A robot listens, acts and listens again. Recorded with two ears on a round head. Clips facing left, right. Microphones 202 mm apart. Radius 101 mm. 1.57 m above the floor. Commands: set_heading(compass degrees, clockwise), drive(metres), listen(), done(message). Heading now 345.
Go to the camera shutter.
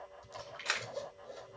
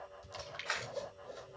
set_heading(295)
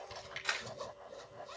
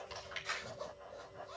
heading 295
set_heading(210)
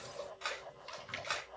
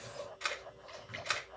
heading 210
set_heading(240)
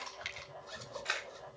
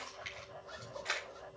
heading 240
set_heading(230)
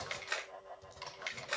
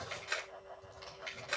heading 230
drive(1.0)
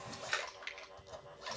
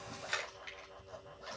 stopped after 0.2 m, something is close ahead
done("Something is in my way. I am facing the camera shutter but have not reached it.")